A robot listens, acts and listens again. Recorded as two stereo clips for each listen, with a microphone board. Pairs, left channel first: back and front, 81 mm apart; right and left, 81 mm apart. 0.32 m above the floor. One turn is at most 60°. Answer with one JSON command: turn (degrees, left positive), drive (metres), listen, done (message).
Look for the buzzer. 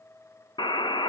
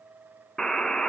{"turn": -60}
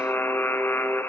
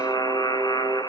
{"turn": -60}
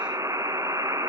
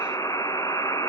{"turn": -45}
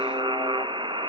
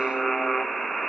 {"done": "Facing the buzzer."}